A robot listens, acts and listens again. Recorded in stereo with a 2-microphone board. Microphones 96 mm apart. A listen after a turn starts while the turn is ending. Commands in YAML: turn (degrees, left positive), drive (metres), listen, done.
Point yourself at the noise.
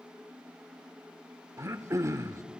turn: -35
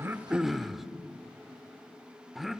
done: "Found it: throat clearing, straight ahead."